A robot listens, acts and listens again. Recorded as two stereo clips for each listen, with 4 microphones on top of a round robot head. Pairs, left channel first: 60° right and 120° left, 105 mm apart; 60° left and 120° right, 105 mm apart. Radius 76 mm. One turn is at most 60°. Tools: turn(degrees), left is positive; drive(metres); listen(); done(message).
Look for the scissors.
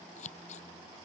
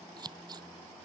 turn(degrees=-60)
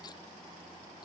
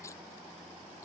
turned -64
listen()
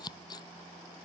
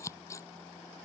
done("Found it: scissors, straight ahead.")